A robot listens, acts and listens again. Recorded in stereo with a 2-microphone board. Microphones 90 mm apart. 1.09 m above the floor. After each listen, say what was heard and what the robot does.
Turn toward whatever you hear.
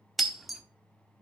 Turn 30° left.
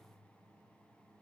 Keep listening.
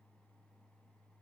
I heard breaking glass, but can't make it out now. It was about 30° right or 150° left.